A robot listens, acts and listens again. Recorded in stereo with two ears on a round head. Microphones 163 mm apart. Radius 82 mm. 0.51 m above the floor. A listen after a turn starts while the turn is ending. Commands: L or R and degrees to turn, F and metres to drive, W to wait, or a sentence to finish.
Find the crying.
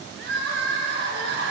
R70
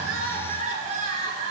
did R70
R40
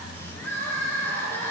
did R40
L15
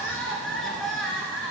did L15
Found it: crying, straight ahead, 1 to 2 m away.